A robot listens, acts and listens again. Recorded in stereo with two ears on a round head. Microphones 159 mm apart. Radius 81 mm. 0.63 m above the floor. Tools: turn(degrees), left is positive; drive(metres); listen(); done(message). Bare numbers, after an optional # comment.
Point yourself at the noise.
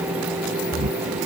# The snoring: about 45° right or 135° right.
turn(-45)
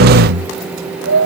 # So it is at 95° right.
turn(-95)
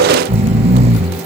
# The snoring is now 35° right.
turn(-35)
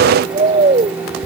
# The snoring is now 30° right.
turn(-30)
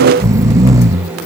# The snoring is now 15° right.
turn(-15)
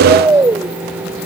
# The snoring is now 10° right.
turn(-10)
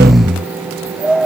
done("Facing the snoring.")